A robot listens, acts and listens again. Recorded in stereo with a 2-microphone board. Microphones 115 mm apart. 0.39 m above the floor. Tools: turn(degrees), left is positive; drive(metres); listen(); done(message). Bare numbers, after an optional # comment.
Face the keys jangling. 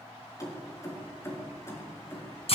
# The keys jangling: about 25° left or 155° left.
turn(25)
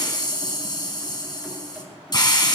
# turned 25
listen()
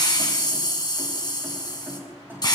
# So it is at 20° right.
turn(-20)
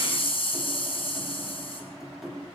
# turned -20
done("Found it: keys jangling, straight ahead.")